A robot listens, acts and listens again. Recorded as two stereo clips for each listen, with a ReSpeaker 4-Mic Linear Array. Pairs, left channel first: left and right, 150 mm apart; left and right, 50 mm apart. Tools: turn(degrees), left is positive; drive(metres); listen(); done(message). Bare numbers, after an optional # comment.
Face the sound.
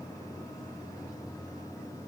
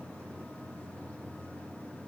listen()
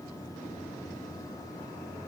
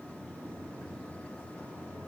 listen()
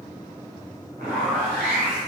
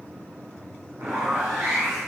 turn(-90)
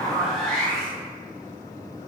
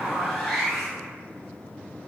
done("Facing the zipper, 1 to 2 m away.")